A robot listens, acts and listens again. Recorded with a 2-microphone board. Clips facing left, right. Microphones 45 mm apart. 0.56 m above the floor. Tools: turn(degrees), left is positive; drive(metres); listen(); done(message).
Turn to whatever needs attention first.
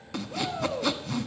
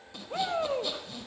turn(degrees=-35)
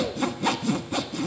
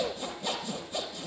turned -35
done("Found it: a shout, straight ahead, 1 to 2 m away.")